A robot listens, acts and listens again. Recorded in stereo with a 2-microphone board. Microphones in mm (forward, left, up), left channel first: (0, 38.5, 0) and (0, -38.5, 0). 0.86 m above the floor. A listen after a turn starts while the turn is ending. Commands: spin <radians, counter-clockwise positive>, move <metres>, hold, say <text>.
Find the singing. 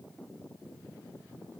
hold
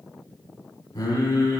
spin 0.79
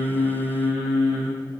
spin -0.26
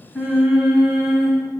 spin -0.35
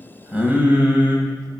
spin -0.35
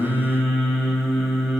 say Found it: singing, straight ahead, 1 to 2 m away.